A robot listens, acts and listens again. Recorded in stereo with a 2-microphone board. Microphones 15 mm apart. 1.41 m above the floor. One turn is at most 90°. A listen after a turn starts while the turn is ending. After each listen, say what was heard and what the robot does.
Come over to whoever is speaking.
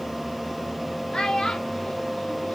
The child speaking: about 55° left or 125° left. Turn 55° left.
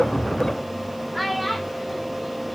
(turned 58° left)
Drive 1.0 m forward.
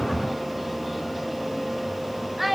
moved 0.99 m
The child speaking is now 10° right. Turn 10° right.
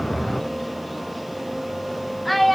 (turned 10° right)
Drive 1.0 m forward.
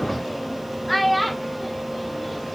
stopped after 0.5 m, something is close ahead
I am next to the child speaking.